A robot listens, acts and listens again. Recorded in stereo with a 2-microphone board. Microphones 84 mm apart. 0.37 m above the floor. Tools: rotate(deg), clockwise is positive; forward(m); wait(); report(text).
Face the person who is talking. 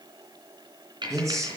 rotate(35)
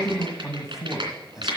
report("Found it: a man speaking, straight ahead.")